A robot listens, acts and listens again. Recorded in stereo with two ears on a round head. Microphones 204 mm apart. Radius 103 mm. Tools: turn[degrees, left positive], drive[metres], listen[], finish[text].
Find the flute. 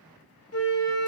Thought: The flute: about 60° left or 120° left.
Action: turn[60]
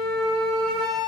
Action: finish[Found it: a flute, straight ahead.]